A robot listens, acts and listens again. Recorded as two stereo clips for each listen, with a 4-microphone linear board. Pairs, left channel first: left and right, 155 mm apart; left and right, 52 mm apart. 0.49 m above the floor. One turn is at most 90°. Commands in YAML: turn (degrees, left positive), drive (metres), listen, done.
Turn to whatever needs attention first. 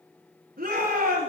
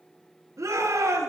turn: -70
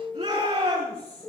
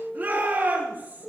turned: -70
turn: -40
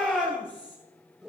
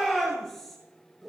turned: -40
done: "Found it: a shout, straight ahead."